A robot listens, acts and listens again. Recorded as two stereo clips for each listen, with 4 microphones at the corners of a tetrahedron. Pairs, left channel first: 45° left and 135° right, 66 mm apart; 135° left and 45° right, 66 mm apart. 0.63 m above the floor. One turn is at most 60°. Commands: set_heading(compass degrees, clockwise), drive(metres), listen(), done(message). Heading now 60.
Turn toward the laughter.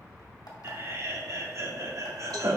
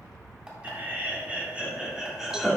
set_heading(120)
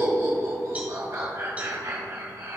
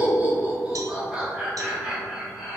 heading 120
set_heading(180)
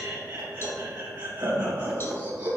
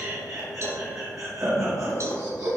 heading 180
set_heading(240)
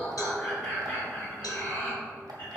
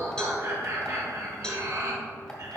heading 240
set_heading(250)
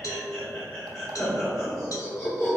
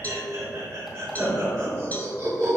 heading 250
done("Facing the laughter.")